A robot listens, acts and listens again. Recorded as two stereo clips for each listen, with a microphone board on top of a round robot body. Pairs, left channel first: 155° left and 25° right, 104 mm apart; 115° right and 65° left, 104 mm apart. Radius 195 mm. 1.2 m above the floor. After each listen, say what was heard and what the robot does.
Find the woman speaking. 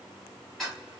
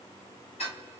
Keep listening.
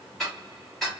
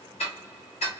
Keep listening.
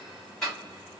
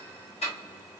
I can't make out a woman speaking, only ticking.